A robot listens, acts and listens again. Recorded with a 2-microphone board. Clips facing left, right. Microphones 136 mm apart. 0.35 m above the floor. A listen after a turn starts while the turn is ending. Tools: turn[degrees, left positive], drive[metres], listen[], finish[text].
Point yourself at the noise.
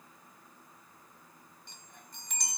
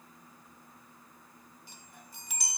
Action: turn[-30]
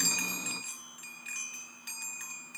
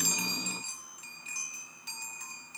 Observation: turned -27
Thought: So it is at 145° right.
Action: turn[-145]
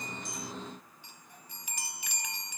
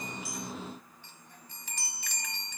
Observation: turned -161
Thought: The chime is now 15° left.
Action: turn[15]
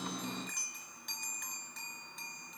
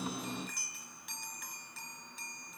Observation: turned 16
Action: finish[Facing the chime.]